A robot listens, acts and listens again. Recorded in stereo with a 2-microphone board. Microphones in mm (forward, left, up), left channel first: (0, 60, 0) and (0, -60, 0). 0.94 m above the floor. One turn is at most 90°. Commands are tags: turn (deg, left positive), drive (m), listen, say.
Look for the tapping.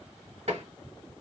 <turn deg="-65"/>
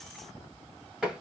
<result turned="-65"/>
<say>Found it: tapping, straight ahead.</say>